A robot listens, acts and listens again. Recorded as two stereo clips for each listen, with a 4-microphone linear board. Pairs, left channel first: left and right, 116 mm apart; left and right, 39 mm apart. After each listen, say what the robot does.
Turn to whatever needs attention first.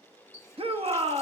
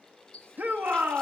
Turn 55° right.
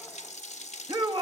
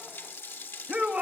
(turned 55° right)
Turn 50° right.
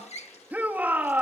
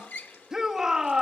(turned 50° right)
Turn 15° right.
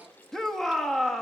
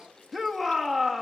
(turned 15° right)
Facing the shout, under 1 m away.